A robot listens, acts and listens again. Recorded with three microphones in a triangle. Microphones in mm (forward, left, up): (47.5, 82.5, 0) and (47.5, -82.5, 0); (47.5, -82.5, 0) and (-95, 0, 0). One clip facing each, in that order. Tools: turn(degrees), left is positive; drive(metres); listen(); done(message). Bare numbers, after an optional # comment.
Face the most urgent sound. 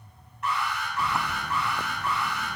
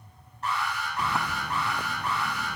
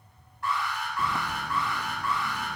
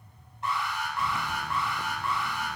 # The alarm: 145° right.
turn(-145)
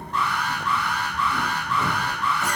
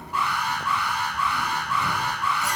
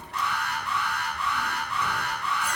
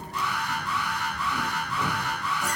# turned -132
# The alarm is now 10° right.
turn(-10)
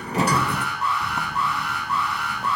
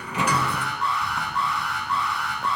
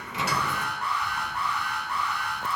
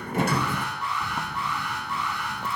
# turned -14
done("Facing the alarm, over 4 m away.")